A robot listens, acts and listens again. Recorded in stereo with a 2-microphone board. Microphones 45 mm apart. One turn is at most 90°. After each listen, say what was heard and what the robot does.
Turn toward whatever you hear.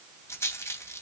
Turn 90° left.
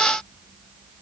Keep listening.
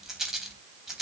The rattle is now 10° right. Turn 10° right.
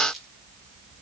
Found it: a rattle, straight ahead, 2 to 4 m away.